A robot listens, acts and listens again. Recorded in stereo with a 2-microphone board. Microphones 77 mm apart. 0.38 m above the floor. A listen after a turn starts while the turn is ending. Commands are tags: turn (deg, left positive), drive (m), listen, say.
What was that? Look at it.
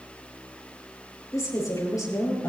<turn deg="50"/>
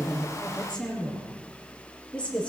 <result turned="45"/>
<turn deg="15"/>
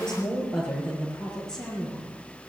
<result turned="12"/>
<turn deg="10"/>
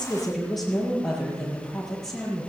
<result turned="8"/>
<say>Found it: a woman speaking, straight ahead.</say>